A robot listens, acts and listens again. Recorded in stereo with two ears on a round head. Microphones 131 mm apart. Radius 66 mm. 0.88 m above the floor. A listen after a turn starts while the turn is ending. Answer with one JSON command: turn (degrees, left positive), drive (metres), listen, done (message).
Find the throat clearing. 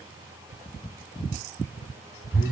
{"listen": true}
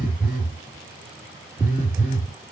{"listen": true}
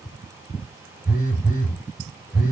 {"done": "I can't make out throat clearing, only a phone buzzing."}